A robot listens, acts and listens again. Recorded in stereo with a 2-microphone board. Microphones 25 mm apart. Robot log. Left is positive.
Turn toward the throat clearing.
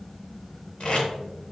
cmd idle
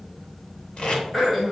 cmd yaw +30
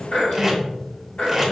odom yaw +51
note: So it is at 120° left.
cmd yaw +120
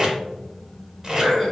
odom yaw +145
note: The throat clearing is now 25° right.
cmd yaw -25
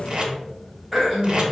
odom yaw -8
note: The throat clearing is now 15° right.
cmd yaw -15
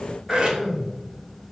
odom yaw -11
end: Facing the throat clearing, 1 to 2 m away.